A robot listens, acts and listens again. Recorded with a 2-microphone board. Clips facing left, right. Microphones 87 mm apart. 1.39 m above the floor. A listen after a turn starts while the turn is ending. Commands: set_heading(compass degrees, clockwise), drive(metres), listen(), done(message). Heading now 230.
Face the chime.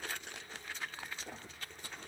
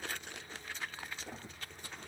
listen()
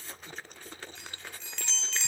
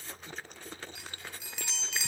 set_heading(260)
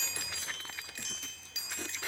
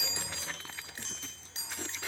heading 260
set_heading(45)
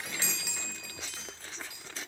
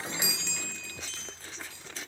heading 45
set_heading(30)
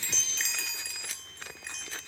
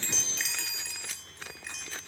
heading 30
done("Facing the chime, 2 to 4 m away.")